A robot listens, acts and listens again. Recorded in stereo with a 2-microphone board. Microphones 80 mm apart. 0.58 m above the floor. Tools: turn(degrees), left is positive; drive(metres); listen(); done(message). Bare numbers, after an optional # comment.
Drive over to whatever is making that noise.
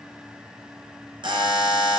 turn(-90)
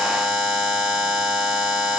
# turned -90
drive(1.0)
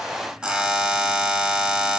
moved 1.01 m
# The buzzer is now 10° right.
turn(-10)
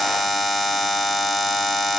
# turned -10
drive(1.0)
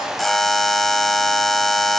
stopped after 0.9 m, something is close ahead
done("I am next to the buzzer.")